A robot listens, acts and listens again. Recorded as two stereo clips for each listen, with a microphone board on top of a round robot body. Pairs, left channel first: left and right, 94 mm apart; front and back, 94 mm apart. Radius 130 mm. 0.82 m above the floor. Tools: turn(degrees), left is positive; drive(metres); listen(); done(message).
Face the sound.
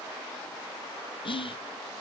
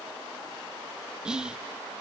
turn(degrees=100)
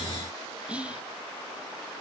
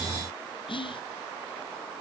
turn(degrees=-15)
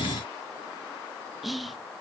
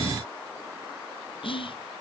done("Facing the whispering, under 1 m away.")